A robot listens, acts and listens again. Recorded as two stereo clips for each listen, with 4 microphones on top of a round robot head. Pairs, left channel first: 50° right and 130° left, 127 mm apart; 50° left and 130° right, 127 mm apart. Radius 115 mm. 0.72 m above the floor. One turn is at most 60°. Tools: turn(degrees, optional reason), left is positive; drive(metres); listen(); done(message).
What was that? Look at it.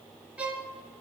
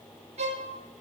turn(degrees=-60, reason="The violin: 150° right.")
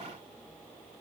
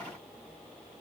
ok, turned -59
turn(degrees=-60, reason="Nothing new. It was at 90° right.")
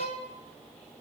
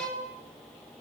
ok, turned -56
turn(degrees=-35, reason="The violin is now 35° right.")
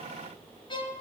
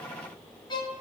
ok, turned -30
done("Found it: a violin, straight ahead, 2 to 4 m away.")